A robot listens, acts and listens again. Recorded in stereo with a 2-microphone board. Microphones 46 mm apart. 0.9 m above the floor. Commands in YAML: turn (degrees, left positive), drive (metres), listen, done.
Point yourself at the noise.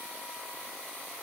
listen: true
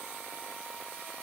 listen: true
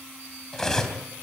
turn: 30
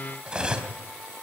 turn: -20
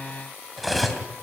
done: "Facing the cutlery clinking, 2 to 4 m away."